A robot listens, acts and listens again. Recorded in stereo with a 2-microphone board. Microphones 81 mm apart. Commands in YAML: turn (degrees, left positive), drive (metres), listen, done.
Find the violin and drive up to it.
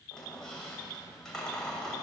listen: true
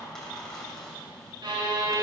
turn: -70
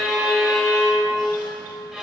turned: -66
turn: -10
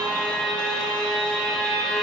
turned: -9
drive: 1.0
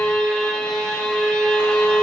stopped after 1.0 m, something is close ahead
turn: 10
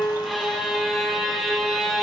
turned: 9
done: "I am next to the violin."